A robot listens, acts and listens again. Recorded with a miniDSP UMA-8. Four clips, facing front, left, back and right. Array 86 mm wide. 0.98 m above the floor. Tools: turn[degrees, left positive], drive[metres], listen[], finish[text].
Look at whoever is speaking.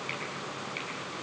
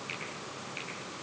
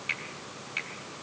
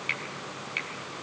Action: listen[]
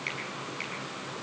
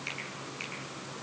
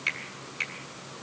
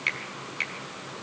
Action: listen[]
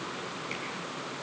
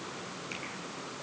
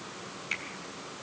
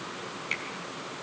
Action: finish[I can't make out anyone speaking to turn to.]